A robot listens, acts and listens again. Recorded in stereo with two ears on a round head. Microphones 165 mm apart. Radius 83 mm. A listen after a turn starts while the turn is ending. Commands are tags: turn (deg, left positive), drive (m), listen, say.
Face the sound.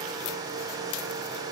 <listen/>
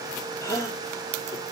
<turn deg="15"/>
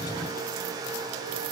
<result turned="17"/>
<listen/>
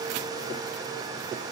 <say>I heard a gasp, but can't make it out now. It was about straight ahead or 150° left.</say>